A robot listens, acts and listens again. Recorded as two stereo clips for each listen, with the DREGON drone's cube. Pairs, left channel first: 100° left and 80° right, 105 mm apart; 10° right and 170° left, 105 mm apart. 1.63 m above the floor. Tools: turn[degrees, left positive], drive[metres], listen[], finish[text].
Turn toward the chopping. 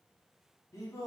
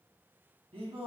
Action: listen[]
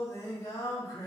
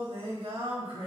Action: listen[]
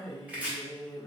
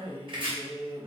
Thought: The chopping: 155° right.
Action: turn[-155]
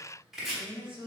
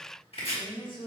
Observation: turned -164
Thought: The chopping is now 10° left.
Action: turn[10]
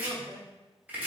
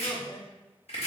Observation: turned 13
Action: finish[Found it: chopping, straight ahead.]